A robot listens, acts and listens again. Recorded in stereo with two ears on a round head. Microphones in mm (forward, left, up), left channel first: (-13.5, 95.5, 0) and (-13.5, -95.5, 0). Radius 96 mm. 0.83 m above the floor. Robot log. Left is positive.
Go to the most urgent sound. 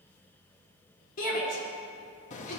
note: The shout: about 40° left or 140° left.
cmd yaw +40
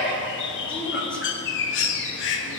cmd idle
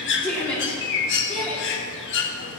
cmd fwd 1.0
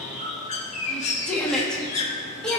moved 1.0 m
cmd fwd 1.0
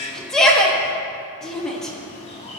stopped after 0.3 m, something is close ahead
end: Arrived at the shout, straight ahead.